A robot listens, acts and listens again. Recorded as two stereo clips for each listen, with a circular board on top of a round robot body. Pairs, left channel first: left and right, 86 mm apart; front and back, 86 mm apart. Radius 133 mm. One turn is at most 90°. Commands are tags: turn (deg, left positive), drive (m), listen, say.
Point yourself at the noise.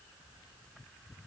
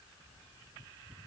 <listen/>
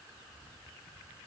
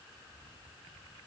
<listen/>
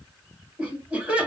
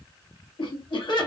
<turn deg="-20"/>
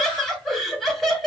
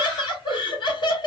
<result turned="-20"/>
<say>Found it: laughter, straight ahead, 1 to 2 m away.</say>